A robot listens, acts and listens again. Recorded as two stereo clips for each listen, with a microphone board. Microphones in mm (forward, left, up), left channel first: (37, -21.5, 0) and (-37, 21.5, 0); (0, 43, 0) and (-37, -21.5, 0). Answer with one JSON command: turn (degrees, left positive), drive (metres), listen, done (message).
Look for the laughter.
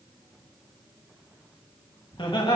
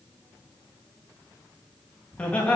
{"turn": -10}
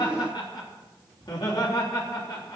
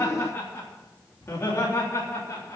{"done": "Found it: laughter, straight ahead, over 4 m away."}